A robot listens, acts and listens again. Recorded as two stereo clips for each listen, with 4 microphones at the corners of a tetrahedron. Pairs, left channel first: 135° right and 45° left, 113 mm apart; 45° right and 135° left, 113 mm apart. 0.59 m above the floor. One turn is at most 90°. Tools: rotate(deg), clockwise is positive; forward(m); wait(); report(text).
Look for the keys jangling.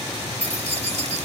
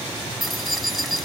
rotate(-45)
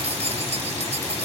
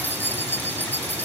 rotate(-25)
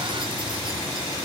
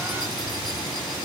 wait()
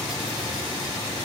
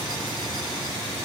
wait()
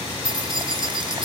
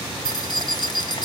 report("Found it: keys jangling, straight ahead.")